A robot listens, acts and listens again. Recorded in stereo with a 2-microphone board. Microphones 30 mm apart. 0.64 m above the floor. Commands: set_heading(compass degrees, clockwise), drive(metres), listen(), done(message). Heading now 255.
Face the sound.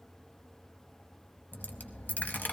set_heading(185)
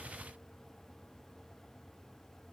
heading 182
listen()
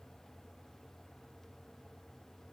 done("I heard a dropped coin, but can't make it out now. It was about 5° right or 35° left.")